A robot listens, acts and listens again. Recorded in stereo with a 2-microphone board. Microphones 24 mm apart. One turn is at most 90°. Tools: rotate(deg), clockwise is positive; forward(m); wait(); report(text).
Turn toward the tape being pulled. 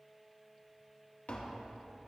wait()
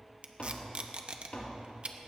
rotate(50)
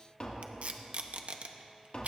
rotate(75)
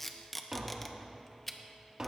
rotate(-10)
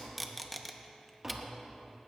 report("Facing the tape being pulled, under 1 m away.")